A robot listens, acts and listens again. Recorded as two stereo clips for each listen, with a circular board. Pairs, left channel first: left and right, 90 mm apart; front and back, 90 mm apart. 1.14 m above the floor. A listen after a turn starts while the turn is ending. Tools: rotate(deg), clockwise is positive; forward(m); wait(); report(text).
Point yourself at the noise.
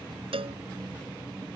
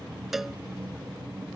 rotate(90)
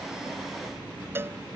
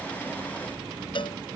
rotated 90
rotate(25)
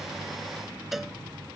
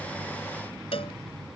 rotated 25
report("Facing the cowbell.")